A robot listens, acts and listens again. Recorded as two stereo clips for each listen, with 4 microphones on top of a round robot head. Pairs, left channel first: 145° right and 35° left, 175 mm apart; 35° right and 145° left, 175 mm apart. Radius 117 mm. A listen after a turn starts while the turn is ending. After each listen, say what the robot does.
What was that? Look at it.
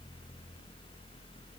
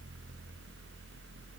Keep listening.
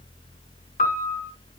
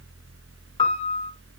Turn 95° right.
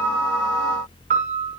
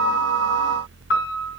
Turn 10° right.
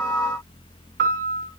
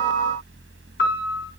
Found it: a piano, straight ahead, 1 to 2 m away.